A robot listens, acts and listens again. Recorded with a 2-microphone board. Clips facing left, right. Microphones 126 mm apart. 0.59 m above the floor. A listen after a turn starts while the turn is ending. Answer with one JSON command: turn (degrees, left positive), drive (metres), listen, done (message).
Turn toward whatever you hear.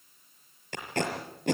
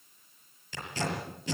{"turn": 60}
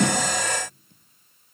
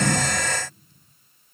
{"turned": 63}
{"listen": true}
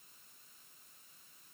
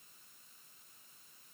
{"listen": true}
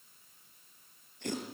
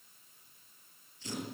{"turn": 60}
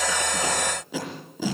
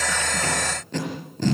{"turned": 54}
{"done": "Found it: tape being pulled, straight ahead, over 4 m away."}